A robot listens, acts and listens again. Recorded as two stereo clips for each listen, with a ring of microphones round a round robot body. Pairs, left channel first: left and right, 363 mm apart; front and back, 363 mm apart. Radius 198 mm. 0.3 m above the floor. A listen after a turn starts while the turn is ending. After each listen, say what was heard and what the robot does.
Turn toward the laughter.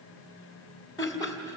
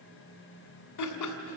The laughter: 10° left. Turn 10° left.
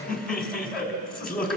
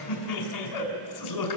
Facing the laughter.